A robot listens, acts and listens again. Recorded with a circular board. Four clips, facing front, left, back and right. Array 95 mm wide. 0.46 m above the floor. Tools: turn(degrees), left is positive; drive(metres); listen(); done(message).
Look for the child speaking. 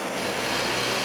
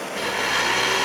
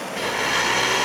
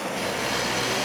listen()
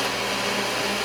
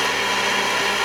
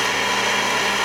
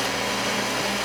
listen()
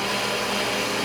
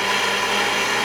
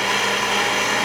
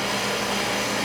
done("I can't make out a child speaking to turn to.")